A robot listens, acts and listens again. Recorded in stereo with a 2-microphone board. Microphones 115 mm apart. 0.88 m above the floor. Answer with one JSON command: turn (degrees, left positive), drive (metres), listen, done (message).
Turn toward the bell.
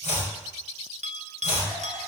{"turn": -70}
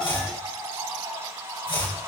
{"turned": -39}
{"listen": true}
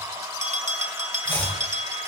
{"turn": -70}
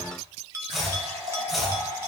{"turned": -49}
{"turn": -20}
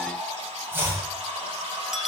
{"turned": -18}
{"done": "Facing the bell, under 1 m away."}